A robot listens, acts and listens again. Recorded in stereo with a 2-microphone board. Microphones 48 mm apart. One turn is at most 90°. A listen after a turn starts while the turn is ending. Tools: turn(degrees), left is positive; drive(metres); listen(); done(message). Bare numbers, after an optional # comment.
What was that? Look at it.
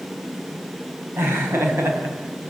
# The laughter: about 70° right or 110° right.
turn(-70)
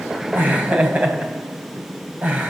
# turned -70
# So it is at 35° right.
turn(-35)
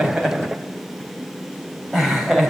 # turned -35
done("Found it: laughter, straight ahead, over 4 m away.")